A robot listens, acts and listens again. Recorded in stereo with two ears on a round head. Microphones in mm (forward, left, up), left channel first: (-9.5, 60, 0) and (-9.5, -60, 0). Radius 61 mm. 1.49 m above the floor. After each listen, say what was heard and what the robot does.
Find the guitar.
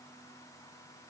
Keep listening.
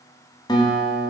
The guitar: about 35° left or 145° left. Turn 35° left.
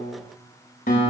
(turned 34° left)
So it is at 115° left. Turn 115° left.
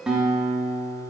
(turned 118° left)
Found it: a guitar, straight ahead, 2 to 4 m away.